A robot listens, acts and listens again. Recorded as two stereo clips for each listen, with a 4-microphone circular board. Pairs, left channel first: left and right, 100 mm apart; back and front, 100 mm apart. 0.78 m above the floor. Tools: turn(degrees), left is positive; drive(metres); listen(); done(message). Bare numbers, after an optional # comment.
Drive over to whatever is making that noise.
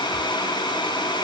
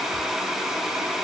listen()
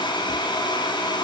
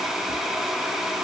listen()
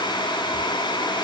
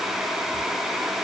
done("I can't make out anything to turn to.")